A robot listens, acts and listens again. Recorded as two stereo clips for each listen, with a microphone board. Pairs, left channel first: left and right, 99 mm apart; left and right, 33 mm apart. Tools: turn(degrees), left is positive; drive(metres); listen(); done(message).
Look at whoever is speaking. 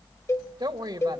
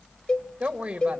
turn(degrees=-50)
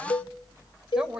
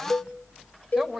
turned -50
turn(degrees=-10)
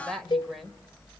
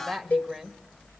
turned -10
done("Found it: a woman speaking, straight ahead.")